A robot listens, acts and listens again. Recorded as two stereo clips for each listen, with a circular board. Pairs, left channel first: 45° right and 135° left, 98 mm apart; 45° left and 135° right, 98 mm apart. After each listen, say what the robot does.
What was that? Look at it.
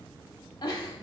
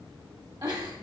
Turn 90° right.
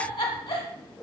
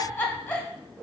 Turn 25° right.
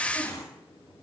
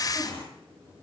Turn 10° left.
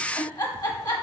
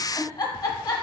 Found it: a giggle, straight ahead, 1 to 2 m away.